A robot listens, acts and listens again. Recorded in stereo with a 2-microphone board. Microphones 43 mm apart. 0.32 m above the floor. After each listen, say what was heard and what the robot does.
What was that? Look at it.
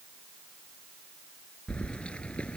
The keys jangling: about 25° left or 155° left. Turn 25° left.
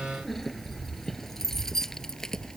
Turn 30° left.
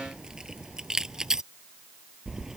So it is at 15° right. Turn 15° right.
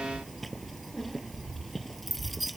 Facing the keys jangling.